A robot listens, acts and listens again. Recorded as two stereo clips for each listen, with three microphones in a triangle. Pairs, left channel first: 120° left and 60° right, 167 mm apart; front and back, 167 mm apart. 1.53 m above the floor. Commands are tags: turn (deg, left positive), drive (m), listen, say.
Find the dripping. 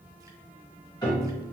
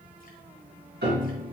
<listen/>
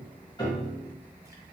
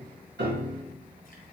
<listen/>
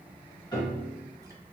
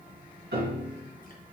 <say>I can't make out dripping to turn to.</say>